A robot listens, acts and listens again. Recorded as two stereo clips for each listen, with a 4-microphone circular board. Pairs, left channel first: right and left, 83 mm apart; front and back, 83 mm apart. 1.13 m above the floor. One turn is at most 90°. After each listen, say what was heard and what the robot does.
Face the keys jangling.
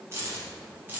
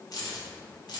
The keys jangling: 25° left. Turn 25° left.
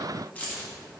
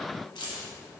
The keys jangling is now 20° right. Turn 20° right.
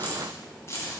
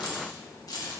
The keys jangling is now 40° right. Turn 40° right.
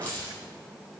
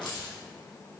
The keys jangling is now 20° right. Turn 20° right.
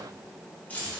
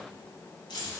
The keys jangling is now 25° right. Turn 25° right.
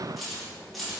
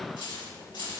Found it: keys jangling, straight ahead.